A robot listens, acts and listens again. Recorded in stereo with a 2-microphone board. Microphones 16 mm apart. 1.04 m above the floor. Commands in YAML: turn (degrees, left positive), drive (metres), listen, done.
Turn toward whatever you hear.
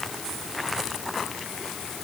listen: true
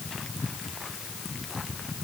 listen: true
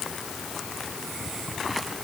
done: "I can't make out anything."